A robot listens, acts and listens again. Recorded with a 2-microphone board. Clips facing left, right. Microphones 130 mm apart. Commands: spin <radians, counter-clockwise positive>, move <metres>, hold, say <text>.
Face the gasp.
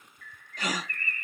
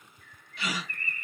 spin 0.70
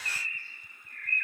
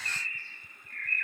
hold
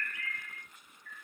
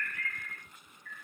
say I heard a gasp, but can't make it out now. It was about straight ahead or 100° left.